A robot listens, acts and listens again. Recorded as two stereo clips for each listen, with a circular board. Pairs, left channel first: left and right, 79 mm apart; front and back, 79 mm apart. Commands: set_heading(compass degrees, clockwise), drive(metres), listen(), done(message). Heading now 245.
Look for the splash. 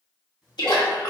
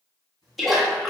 set_heading(155)
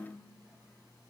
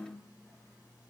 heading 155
done("I heard a splash from this way, but can't make it out now.")